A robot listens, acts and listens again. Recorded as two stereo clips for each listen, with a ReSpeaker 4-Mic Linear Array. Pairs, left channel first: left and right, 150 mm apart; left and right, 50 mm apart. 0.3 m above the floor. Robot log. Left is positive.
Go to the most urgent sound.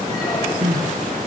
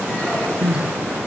note: The crying: about 70° right or 110° right.
cmd yaw -70
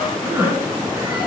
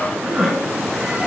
note: So it is at 15° right.
cmd yaw -15
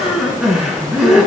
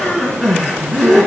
cmd fwd 1.0
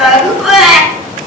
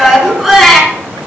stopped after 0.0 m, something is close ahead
end: Something is in my way. I am facing the crying but have not reached it.